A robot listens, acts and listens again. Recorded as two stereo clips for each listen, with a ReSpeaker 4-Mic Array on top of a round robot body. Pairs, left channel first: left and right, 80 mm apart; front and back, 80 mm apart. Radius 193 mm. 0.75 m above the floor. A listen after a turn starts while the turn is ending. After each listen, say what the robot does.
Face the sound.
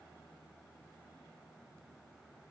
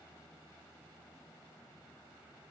Keep listening.
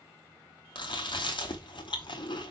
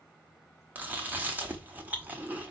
Turn 110° left.
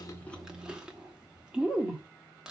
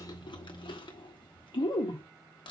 Turn 10° right.
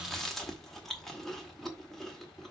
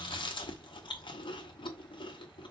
Facing the chewing, 1 to 2 m away.